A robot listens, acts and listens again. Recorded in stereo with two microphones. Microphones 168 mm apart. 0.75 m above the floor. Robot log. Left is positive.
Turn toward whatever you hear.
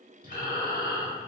note: The breathing: about 55° left or 125° left.
cmd yaw +55
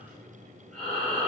end: Found it: breathing, straight ahead, 1 to 2 m away.